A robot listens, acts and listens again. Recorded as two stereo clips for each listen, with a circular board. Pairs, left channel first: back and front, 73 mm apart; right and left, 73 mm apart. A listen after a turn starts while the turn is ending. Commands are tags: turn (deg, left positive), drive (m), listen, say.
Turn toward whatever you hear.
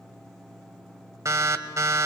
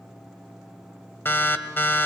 <turn deg="-35"/>
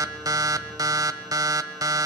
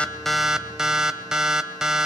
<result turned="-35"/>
<turn deg="10"/>
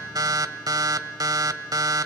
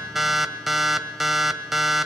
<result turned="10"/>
<say>Found it: an alarm, straight ahead.</say>